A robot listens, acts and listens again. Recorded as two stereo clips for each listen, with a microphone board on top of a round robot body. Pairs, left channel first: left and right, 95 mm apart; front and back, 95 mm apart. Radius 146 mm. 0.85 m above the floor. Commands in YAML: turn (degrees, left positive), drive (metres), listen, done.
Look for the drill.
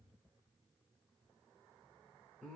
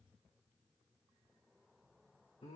listen: true
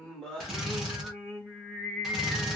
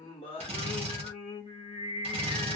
turn: 180
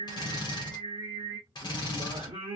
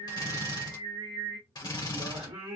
turn: 45
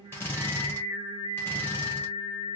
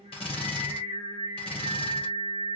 turn: 25
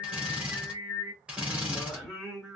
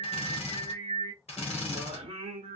turn: -10
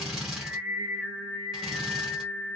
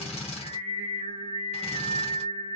done: "Found it: a drill, straight ahead."